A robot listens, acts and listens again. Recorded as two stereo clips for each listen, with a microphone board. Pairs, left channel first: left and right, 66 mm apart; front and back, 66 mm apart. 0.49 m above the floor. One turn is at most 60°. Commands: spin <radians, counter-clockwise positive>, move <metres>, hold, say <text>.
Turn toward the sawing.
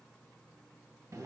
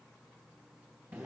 hold
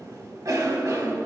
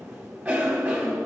hold
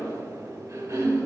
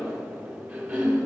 say I can't make out sawing, only a cough.